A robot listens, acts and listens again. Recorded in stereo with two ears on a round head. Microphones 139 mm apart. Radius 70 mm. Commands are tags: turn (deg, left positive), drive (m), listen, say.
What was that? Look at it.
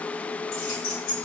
<turn deg="60"/>
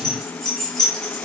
<say>Found it: keys jangling, straight ahead.</say>